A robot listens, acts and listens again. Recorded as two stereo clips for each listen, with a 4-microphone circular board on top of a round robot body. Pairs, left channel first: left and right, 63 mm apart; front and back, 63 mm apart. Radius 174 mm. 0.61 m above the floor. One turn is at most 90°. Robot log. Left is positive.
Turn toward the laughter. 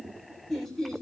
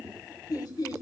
end: Found it: laughter, straight ahead, 2 to 4 m away.